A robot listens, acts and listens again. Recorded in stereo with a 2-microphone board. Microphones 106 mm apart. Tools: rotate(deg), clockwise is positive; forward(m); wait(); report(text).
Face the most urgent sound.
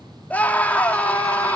rotate(-30)
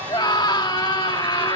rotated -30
rotate(-135)
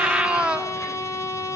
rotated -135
rotate(10)
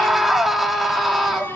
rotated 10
report("Found it: a scream, straight ahead, 2 to 4 m away.")